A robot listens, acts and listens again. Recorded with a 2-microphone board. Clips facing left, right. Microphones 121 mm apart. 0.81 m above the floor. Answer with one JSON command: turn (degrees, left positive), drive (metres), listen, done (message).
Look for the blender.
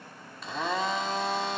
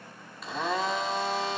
{"turn": 30}
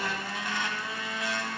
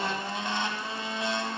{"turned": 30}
{"turn": -30}
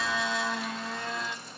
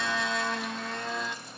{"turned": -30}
{"done": "Facing the blender."}